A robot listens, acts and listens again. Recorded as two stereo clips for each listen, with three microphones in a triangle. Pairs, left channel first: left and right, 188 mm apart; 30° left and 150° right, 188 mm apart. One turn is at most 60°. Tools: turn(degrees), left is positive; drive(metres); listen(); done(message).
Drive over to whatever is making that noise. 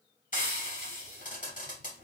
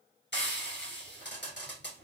turn(degrees=45)
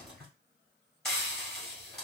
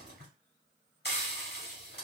drive(metres=1.0)
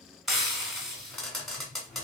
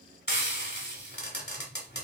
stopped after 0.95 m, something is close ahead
done("I am next to the frying.")